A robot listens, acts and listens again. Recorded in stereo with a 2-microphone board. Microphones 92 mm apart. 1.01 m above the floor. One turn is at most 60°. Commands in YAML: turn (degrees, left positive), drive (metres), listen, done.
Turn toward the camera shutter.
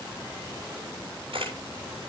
turn: -60
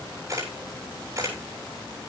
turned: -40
turn: -35
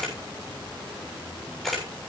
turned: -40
done: "Facing the camera shutter."